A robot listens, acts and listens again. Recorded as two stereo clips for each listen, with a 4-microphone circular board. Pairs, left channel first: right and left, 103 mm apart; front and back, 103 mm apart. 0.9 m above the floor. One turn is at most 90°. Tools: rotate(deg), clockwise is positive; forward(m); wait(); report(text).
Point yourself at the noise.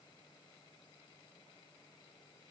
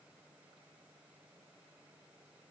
wait()
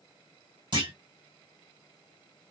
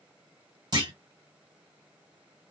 rotate(-90)
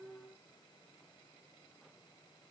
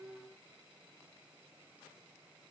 rotate(-40)
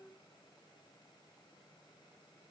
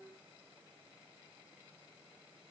report("Facing where the clunk came from. I can't hear it now.")